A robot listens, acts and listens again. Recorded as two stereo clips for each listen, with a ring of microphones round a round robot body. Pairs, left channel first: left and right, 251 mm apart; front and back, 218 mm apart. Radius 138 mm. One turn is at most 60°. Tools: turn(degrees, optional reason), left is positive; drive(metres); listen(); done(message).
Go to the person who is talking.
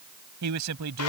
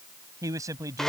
turn(degrees=-60, reason="The man speaking: 105° right.")
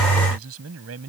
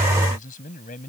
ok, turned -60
turn(degrees=-60, reason="The man speaking is now 60° right.")
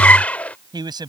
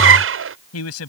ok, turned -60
turn(degrees=-15, reason="The man speaking is now 15° right.")
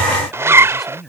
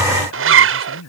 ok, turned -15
drive(metres=1.0)
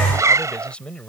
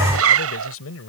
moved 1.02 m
drive(metres=1.0)
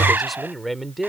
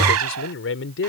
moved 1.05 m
drive(metres=1.0)
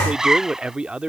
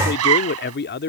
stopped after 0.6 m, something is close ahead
done("I am next to the man speaking.")